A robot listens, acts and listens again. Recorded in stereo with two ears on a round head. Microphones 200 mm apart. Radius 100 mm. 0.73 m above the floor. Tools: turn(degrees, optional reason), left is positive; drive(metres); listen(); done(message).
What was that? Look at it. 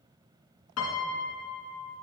turn(degrees=90)
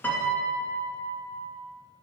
turn(degrees=10, reason="So it is at 10° left.")
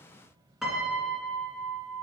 done("Found it: a piano, straight ahead, 1 to 2 m away.")